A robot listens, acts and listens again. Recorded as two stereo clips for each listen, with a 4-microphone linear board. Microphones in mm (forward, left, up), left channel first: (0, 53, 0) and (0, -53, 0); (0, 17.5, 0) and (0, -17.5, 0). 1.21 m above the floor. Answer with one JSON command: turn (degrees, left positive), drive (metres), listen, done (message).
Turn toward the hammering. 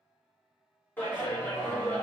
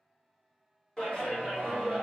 {"listen": true}
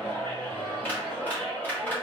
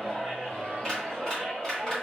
{"listen": true}
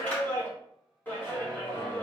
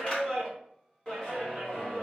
{"done": "I can't make out hammering, only a clap."}